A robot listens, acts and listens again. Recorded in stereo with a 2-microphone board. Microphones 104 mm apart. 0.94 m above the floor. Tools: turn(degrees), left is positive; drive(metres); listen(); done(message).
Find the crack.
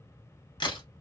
turn(degrees=50)
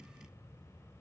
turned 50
listen()
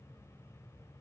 done("I heard a crack, but can't make it out now. It was about straight ahead or 80° left.")